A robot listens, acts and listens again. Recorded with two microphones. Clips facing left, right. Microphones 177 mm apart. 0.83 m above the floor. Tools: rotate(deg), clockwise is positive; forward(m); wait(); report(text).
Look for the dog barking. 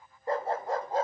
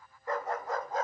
rotate(-30)
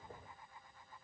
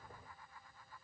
wait()
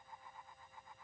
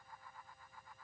wait()
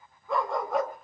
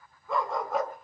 report("Found it: a dog barking, straight ahead, over 4 m away.")